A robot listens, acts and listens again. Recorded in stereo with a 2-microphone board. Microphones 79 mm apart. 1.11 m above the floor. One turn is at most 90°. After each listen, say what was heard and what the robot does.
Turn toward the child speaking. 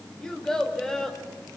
Turn 30° left.
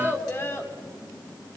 So it is at 150° left. Turn 90° left.
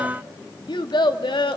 The child speaking is now 85° left. Turn 85° left.
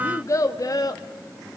The child speaking is now 55° left. Turn 55° left.
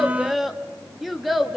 Facing the child speaking, 1 to 2 m away.